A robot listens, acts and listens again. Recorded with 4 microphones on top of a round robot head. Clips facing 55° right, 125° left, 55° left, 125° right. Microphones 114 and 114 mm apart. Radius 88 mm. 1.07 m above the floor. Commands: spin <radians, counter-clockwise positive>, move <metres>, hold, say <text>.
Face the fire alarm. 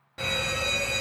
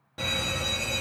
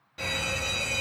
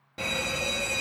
spin -2.62
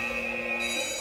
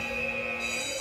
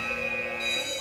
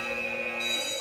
spin -0.70
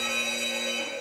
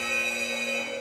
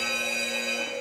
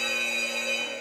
say Found it: a fire alarm, straight ahead, 1 to 2 m away.